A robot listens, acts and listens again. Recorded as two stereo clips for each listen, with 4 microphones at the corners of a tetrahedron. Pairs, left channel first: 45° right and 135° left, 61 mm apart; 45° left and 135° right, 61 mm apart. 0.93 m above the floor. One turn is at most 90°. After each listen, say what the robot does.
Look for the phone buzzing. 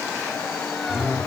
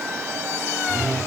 Turn 35° left.
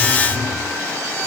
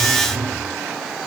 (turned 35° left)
Facing the phone buzzing, over 4 m away.